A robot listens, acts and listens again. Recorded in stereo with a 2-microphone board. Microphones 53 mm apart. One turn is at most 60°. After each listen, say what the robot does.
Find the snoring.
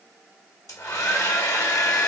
Keep listening.
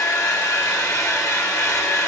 Keep listening.
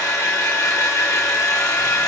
I can't make out snoring, only a hair dryer.